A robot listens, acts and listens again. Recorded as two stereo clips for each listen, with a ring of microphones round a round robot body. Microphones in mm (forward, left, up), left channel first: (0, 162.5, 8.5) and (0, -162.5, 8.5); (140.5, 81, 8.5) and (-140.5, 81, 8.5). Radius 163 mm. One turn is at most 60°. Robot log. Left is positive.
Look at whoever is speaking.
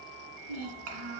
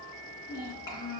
note: The child speaking: 80° right.
cmd yaw -60
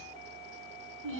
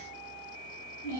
note: The child speaking is now 40° right.
cmd yaw -40
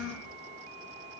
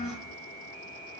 end: Facing the child speaking, 2 to 4 m away.